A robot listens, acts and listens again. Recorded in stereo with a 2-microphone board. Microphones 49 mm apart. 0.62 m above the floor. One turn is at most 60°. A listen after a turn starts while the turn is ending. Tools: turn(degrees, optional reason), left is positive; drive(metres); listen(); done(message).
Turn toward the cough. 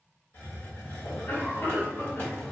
turn(degrees=55, reason="The cough: about 55° left or 125° left.")
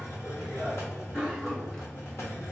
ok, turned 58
turn(degrees=15, reason="So it is at 15° left.")
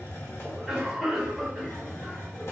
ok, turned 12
done("Facing the cough.")